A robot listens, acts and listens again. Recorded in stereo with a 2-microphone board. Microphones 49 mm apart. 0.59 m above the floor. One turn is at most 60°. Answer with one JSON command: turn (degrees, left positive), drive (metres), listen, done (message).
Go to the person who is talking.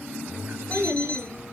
{"turn": -60}
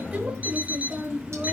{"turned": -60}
{"turn": -35}
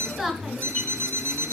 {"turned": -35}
{"turn": -10}
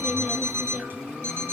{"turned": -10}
{"listen": true}
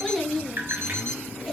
{"drive": 1.0}
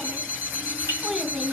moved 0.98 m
{"turn": -10}
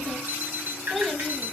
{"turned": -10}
{"drive": 1.0}
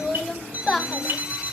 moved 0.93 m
{"drive": 1.0}
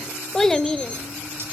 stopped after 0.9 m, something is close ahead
{"done": "I am next to the child speaking."}